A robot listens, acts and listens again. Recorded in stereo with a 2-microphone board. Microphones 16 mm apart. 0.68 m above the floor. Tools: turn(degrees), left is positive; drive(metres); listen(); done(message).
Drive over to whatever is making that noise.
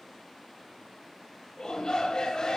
turn(degrees=50)
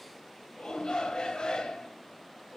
turn(degrees=80)
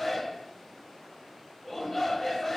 turn(degrees=15)
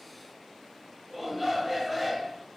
drive(metres=1.0)
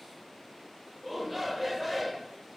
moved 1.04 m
drive(metres=1.0)
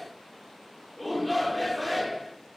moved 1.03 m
drive(metres=1.0)
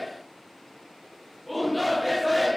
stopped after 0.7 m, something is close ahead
done("I am next to the shout.")